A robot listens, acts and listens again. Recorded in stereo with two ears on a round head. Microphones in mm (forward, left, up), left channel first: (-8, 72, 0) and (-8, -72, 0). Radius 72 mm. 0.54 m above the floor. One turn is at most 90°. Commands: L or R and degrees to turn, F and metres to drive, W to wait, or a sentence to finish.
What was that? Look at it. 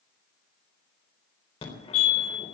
L35
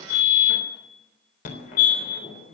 L90
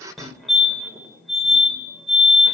Facing the fire alarm, 2 to 4 m away.